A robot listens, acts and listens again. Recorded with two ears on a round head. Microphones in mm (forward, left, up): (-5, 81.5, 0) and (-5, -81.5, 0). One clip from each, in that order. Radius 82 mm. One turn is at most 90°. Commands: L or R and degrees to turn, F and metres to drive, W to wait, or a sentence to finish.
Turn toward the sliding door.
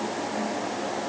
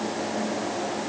W
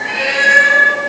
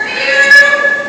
W
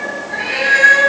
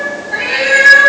I can't make out a sliding door, only a cat meowing.